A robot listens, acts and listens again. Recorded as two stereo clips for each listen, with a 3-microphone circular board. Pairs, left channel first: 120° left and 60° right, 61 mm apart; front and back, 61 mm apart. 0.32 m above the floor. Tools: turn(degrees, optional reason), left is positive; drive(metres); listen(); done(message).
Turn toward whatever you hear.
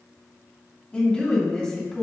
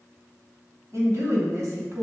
turn(degrees=-165, reason="The woman speaking: 165° right.")
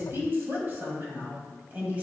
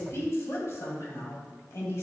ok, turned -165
done("Found it: a woman speaking, straight ahead.")